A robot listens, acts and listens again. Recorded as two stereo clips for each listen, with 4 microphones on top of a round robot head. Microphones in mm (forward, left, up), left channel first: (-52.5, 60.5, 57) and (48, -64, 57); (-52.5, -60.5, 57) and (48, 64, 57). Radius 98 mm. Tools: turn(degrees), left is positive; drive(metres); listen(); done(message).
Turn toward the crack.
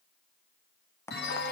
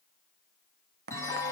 turn(degrees=55)
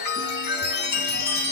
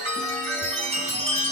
done("Facing where the crack came from. I can't hear it now.")